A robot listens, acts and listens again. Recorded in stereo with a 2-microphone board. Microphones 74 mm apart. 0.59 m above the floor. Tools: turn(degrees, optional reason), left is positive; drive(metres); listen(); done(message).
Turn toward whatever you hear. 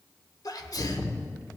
turn(degrees=55, reason="The sneeze: about 55° left or 125° left.")
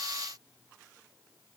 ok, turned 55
listen()
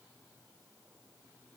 done("I heard a sneeze, but can't make it out now. It was about straight ahead or 70° left.")